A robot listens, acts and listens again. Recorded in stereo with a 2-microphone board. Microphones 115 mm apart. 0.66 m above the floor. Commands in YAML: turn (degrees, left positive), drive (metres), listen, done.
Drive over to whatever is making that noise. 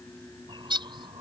turn: -45
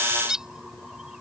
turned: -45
drive: 1.0
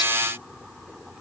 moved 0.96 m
listen: true
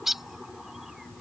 drive: 1.0
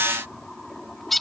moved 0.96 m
drive: 1.0
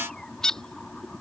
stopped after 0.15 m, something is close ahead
turn: 10
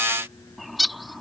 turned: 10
done: "I am next to the bird."